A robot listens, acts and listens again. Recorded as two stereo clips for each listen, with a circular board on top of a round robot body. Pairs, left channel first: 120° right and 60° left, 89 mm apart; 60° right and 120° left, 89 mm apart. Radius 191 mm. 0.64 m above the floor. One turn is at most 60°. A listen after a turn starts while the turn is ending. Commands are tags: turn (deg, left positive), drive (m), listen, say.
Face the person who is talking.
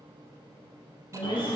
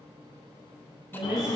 <turn deg="-60"/>
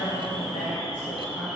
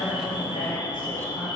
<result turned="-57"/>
<turn deg="-60"/>
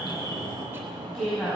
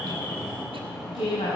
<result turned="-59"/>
<turn deg="-35"/>
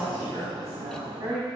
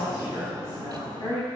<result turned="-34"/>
<say>Facing the woman speaking, over 4 m away.</say>